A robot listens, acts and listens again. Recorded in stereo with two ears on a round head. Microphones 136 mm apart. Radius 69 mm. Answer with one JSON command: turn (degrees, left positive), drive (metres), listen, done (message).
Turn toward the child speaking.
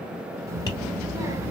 {"turn": -20}
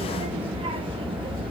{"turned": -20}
{"turn": -135}
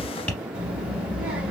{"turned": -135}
{"turn": -10}
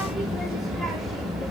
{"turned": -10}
{"done": "Facing the child speaking, under 1 m away."}